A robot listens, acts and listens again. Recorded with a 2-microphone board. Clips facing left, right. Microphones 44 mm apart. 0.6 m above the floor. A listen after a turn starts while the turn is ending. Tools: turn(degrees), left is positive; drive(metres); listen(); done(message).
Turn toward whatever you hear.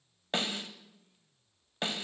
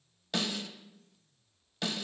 turn(degrees=30)
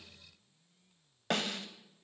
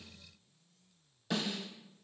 turn(degrees=120)
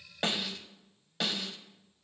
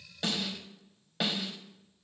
turn(degrees=-10)
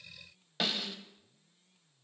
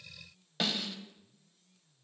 done("Facing the snare drum, 1 to 2 m away.")